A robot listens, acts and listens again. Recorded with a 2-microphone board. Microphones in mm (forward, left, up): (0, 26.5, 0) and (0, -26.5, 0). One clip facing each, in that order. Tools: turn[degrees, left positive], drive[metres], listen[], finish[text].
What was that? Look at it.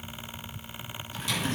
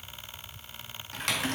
Thought: The typing on a keyboard: about 70° right or 110° right.
Action: turn[-70]
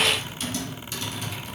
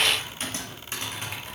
Thought: So it is at 40° right.
Action: turn[-40]
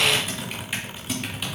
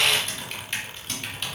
Thought: The typing on a keyboard is now 10° left.
Action: turn[10]
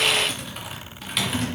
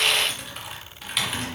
Action: finish[Facing the typing on a keyboard.]